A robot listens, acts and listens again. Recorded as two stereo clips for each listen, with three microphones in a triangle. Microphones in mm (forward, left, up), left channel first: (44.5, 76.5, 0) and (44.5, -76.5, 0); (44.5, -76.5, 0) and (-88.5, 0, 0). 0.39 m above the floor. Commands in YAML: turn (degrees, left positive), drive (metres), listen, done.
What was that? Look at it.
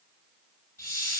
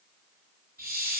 turn: 155
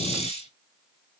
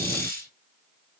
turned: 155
turn: 45
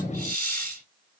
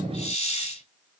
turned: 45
turn: 15
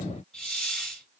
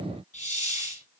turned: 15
done: "Found it: a hiss, straight ahead."